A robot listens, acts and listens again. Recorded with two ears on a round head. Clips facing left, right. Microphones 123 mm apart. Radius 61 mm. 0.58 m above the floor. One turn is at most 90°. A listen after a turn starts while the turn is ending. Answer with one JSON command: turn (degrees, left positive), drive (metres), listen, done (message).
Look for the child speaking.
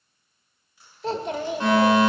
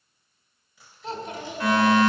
{"turn": 55}
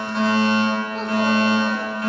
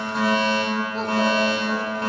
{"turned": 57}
{"listen": true}
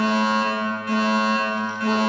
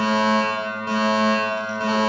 {"listen": true}
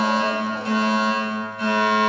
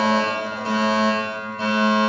{"done": "I heard a child speaking, but can't make it out now. It was about straight ahead or 70° left."}